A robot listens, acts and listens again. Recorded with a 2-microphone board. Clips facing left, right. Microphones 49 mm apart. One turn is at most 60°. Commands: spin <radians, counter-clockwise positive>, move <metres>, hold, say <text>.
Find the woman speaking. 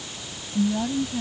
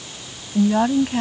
spin -1.05
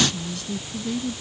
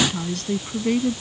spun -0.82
spin -0.96
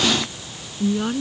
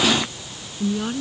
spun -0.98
spin 0.17
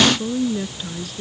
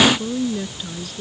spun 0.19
say Found it: a woman speaking, straight ahead.